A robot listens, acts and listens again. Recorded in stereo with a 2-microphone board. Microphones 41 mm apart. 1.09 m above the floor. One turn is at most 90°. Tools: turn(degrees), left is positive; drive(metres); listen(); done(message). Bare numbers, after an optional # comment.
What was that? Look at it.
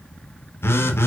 # The phone buzzing: about 70° left or 110° left.
turn(70)
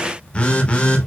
# So it is at 30° left.
turn(30)
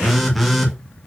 done("Found it: a phone buzzing, straight ahead.")